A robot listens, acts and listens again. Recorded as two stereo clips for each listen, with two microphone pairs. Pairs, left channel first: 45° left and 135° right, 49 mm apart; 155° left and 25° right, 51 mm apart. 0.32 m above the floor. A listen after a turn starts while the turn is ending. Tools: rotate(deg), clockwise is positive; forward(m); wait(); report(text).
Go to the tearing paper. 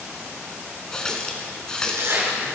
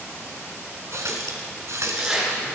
rotate(100)
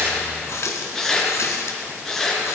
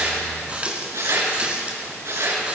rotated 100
rotate(35)
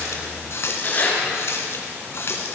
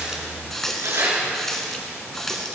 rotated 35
forward(1.0)
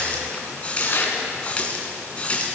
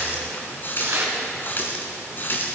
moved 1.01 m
forward(1.0)
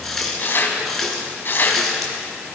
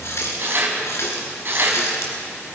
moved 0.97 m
rotate(-10)
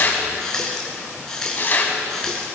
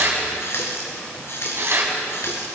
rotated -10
forward(1.0)
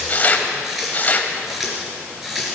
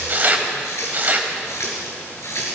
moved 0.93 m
rotate(-10)
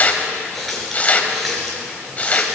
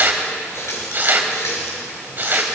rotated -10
forward(1.0)
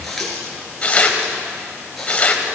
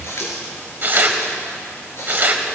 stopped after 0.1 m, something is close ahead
report("I am next to the tearing paper.")